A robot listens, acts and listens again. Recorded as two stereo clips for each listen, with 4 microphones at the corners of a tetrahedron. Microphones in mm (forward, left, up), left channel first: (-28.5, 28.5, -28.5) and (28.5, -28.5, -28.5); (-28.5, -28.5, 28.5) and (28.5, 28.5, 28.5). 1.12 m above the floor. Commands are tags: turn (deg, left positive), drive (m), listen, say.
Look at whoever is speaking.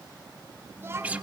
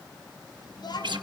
<turn deg="-110"/>
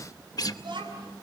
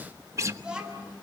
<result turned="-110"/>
<turn deg="-35"/>
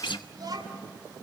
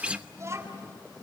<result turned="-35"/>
<turn deg="-10"/>
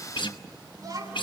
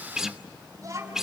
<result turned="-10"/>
<say>Found it: a child speaking, straight ahead.</say>